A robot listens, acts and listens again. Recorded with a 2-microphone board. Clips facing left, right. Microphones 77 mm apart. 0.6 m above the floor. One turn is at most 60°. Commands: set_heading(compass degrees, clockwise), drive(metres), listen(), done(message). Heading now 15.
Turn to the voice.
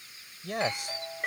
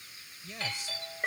set_heading(315)
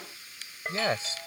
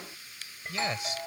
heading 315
set_heading(275)
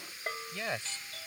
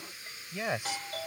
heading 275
set_heading(290)
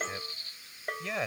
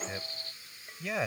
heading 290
done("Found it: a man speaking, straight ahead.")